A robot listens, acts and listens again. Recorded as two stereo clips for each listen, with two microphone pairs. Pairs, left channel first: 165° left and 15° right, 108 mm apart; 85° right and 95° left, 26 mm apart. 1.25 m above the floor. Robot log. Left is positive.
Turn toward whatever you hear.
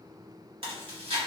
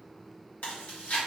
note: The chewing: 45° right.
cmd yaw -45
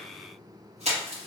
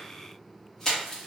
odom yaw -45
note: The chewing is now 10° right.
cmd yaw -10
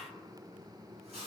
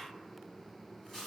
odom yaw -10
end: Found it: chewing, straight ahead, 1 to 2 m away.